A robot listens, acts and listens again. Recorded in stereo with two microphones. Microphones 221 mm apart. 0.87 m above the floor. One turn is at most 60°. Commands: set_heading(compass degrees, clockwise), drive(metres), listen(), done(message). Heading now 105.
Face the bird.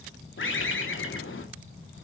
set_heading(45)
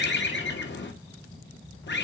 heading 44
set_heading(349)
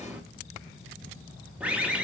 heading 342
done("Found it: a bird, straight ahead, under 1 m away.")